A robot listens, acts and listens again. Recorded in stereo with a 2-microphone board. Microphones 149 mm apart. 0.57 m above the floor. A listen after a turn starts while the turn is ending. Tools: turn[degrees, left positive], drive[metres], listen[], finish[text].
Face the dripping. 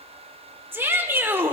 Action: listen[]
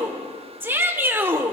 Action: listen[]
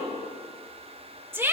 Action: finish[I can't make out dripping, only a shout.]